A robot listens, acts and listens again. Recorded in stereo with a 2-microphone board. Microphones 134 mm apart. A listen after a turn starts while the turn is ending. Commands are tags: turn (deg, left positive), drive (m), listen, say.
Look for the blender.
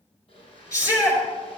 <turn deg="45"/>
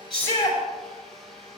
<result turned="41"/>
<say>Found it: a blender, straight ahead.</say>